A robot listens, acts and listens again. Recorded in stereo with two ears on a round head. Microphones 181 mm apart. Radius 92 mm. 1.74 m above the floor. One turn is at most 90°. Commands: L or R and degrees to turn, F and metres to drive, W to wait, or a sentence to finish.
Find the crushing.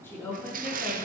R45
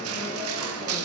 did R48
R90
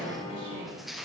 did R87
Found it: crushing, straight ahead.